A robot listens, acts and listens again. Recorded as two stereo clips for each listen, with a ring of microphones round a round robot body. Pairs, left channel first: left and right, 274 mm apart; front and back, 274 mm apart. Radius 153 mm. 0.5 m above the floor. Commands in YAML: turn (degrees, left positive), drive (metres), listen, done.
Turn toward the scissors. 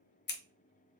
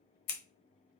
turn: 35
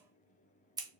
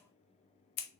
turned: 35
turn: -10
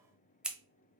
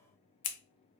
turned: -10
done: "Facing the scissors, under 1 m away."